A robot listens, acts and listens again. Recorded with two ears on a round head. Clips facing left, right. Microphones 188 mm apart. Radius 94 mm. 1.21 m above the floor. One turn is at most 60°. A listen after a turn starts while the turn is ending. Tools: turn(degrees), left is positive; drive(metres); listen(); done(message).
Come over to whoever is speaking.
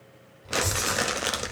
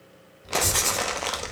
turn(degrees=-15)
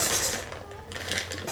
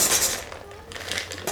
turn(degrees=-60)
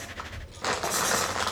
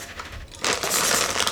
turn(degrees=-60)
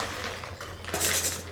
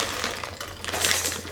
turn(degrees=-45)
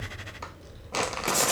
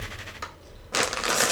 turn(degrees=15)
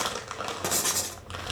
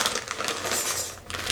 drive(metres=1.0)
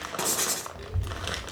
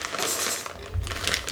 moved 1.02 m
drive(metres=1.0)
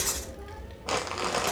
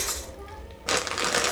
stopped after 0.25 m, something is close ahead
done("I am next to the child speaking.")